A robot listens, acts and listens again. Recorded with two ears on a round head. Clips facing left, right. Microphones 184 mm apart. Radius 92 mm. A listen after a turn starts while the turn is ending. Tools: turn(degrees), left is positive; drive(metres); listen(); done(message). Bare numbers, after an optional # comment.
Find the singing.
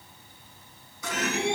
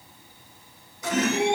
# The singing: about 25° right or 155° right.
turn(-25)
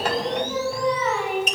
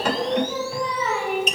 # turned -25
done("Found it: singing, straight ahead, over 4 m away.")